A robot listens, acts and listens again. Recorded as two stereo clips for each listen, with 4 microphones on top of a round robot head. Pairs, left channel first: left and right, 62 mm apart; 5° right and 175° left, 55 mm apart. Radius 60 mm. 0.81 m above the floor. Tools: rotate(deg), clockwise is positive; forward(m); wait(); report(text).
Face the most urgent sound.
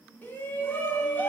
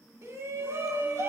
rotate(-145)
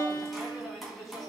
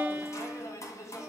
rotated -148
report("Found it: a shout, straight ahead.")